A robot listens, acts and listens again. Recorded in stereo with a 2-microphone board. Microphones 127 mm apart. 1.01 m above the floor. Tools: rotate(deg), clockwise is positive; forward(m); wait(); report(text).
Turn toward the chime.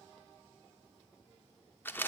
wait()
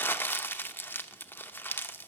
wait()
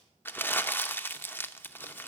report("I can't make out a chime to turn to.")